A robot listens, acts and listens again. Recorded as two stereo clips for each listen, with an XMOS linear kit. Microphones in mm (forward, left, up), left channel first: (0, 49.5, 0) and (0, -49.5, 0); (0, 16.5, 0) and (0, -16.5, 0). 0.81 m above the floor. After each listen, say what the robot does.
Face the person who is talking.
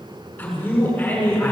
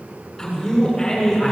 Turn 15° left.
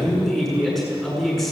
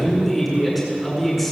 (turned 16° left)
Facing the man speaking.